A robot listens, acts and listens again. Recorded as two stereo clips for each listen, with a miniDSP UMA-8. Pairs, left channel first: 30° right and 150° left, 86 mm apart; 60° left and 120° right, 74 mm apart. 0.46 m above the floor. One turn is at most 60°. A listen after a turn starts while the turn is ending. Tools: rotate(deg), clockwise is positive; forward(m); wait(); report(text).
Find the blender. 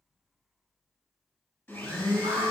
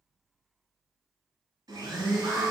rotate(60)
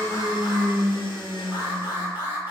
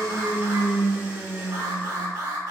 rotate(50)
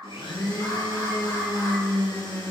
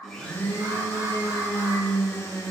report("Facing the blender.")